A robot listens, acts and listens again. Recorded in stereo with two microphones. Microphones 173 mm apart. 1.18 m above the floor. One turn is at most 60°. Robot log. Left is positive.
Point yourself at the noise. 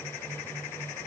cmd idle
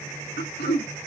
note: The throat clearing: about 70° left or 110° left.
cmd yaw +60
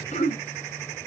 note: So it is at 45° left.
cmd yaw +45
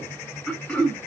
end: Facing the throat clearing, 1 to 2 m away.